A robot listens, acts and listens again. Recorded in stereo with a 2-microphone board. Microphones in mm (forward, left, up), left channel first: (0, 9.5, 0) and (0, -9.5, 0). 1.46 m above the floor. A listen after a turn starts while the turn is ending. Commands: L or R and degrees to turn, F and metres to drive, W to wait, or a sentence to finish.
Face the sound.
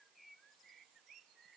W
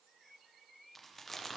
L30
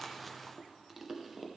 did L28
R15
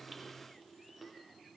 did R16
Found it: chewing, straight ahead, under 1 m away.